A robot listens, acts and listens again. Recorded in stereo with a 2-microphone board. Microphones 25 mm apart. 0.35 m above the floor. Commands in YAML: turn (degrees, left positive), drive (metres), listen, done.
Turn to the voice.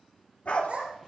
turn: -45
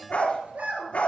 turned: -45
turn: -90
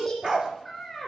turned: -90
done: "Found it: a child speaking, straight ahead, 2 to 4 m away."